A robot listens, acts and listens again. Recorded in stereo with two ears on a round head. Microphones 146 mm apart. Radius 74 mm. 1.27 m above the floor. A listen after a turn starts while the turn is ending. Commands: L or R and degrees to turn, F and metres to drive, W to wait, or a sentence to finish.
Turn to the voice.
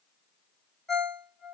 W
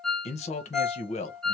L40
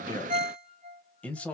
L10
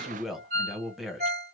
Found it: a man speaking, straight ahead, under 1 m away.